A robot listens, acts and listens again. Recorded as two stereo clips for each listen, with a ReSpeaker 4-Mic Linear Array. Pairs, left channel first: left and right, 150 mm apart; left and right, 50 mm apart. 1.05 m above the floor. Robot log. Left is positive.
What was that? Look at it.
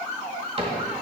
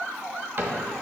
note: The cupboard door: about 40° right or 140° right.
cmd yaw -40
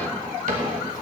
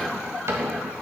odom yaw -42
note: So it is at 90° right.
cmd yaw -90
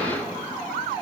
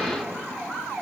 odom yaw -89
cmd idle
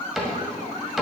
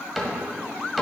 end: Facing the cupboard door, 1 to 2 m away.